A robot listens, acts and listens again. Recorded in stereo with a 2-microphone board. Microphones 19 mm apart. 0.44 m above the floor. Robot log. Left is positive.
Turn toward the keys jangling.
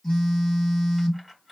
cmd yaw -30
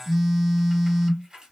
note: So it is at 140° right.
cmd yaw -140
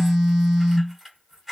note: The keys jangling is now 15° right.
cmd yaw -15
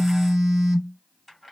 end: Facing the keys jangling.